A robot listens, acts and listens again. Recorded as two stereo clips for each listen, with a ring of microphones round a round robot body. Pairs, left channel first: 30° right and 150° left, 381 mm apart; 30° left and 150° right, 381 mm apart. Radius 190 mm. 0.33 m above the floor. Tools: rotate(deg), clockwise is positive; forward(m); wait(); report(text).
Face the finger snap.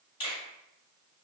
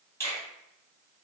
rotate(50)
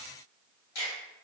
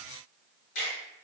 rotate(15)
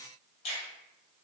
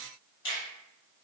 report("Facing the finger snap.")